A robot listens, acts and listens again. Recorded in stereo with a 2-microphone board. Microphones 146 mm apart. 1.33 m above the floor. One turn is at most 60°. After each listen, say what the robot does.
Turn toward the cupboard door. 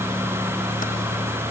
Keep listening.
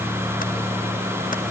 Keep listening.
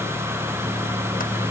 I can't make out a cupboard door to turn to.